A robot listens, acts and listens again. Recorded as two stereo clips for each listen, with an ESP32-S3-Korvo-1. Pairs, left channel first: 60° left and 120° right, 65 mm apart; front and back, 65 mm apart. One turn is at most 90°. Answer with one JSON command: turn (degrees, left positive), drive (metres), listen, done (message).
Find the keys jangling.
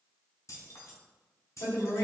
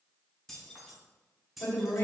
{"turn": 90}
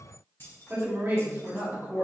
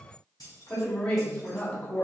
{"turn": 15}
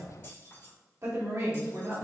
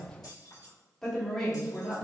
{"turn": 10}
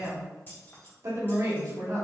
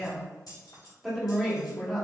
{"done": "Facing the keys jangling."}